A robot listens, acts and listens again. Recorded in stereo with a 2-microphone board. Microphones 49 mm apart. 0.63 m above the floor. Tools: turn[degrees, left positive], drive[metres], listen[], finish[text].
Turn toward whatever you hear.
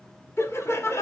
Thought: The laughter: about 65° left or 115° left.
Action: turn[65]
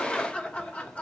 Thought: So it is at 30° left.
Action: turn[30]
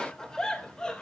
Thought: The laughter is now 20° left.
Action: turn[20]
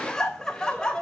Thought: The laughter is now 15° left.
Action: turn[15]
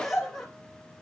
Action: finish[Found it: laughter, straight ahead.]